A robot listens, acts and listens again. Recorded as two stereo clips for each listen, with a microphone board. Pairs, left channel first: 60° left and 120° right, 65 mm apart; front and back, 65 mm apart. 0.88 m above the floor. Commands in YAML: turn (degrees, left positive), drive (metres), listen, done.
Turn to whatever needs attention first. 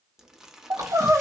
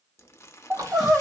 turn: -95
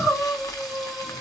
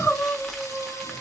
turn: 25
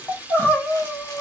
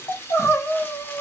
done: "Found it: crying, straight ahead."